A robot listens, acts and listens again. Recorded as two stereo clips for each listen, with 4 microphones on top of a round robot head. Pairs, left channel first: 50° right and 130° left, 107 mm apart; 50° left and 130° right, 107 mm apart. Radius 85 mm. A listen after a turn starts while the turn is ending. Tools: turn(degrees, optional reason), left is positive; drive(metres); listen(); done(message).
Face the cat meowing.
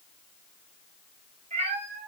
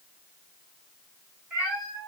turn(degrees=150, reason="The cat meowing: 150° left.")
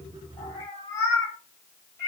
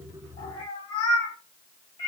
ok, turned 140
turn(degrees=10, reason="The cat meowing is now 10° left.")
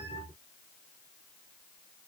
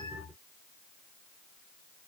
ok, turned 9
listen()
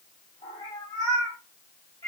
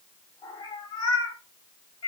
done("Found it: a cat meowing, straight ahead, 2 to 4 m away.")